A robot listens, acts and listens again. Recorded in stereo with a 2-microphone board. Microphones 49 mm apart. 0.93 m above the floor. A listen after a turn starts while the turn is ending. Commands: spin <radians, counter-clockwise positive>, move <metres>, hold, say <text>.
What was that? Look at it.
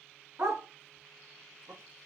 spin -1.22
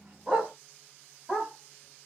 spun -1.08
spin -0.26
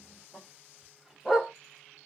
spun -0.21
say Facing the dog barking.